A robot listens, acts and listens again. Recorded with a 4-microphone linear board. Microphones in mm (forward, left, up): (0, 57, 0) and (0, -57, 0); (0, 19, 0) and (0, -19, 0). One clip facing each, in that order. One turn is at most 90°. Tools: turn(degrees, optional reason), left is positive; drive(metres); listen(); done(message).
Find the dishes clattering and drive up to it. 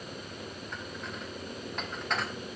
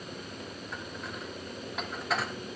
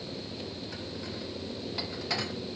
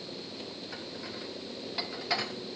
turn(degrees=-30)
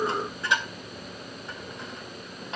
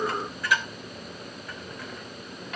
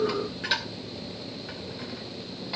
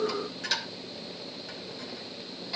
turn(degrees=25, reason="So it is at 25° left.")
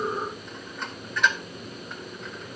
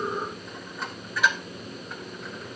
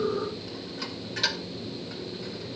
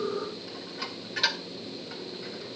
drive(metres=1.0)
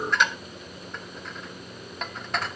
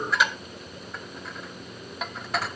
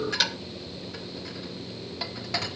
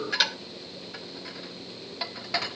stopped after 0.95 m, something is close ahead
done("Arrived at the dishes clattering, straight ahead.")